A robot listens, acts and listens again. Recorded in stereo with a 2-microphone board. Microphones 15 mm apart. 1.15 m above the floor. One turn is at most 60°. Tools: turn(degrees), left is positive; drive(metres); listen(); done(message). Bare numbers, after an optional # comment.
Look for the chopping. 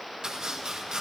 # The chopping: about 70° right or 110° right.
turn(-60)
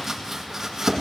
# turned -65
# So it is at 35° right.
turn(-35)
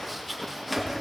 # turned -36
done("Found it: chopping, straight ahead.")